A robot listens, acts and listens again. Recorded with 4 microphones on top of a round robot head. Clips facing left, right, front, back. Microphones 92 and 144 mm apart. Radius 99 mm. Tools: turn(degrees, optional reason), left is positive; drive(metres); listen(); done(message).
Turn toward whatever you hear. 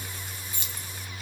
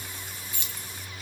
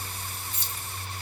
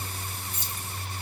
turn(degrees=35, reason="The keys jangling: 35° left.")
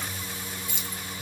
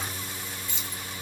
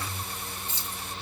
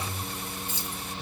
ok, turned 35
turn(degrees=10, reason="The keys jangling is now 10° left.")
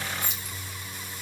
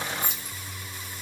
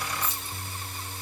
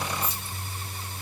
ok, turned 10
done("Found it: keys jangling, straight ahead.")